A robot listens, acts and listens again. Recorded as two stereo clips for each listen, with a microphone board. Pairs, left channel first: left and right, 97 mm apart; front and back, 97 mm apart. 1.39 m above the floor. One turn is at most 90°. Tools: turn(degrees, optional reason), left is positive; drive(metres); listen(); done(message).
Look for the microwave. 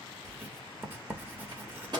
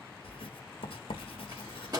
turn(degrees=-90, reason="The microwave: 130° right.")
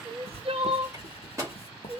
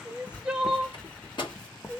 turn(degrees=-30, reason="The microwave is now 30° right.")
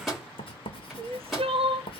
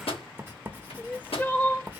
done("Facing the microwave, 2 to 4 m away.")